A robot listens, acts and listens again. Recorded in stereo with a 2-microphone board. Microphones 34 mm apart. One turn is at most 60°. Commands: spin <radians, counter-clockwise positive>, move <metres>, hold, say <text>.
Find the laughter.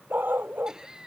spin -0.35
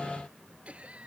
spin -1.05
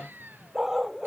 spin -1.05
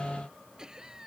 spin -0.35
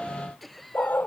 say Facing the laughter.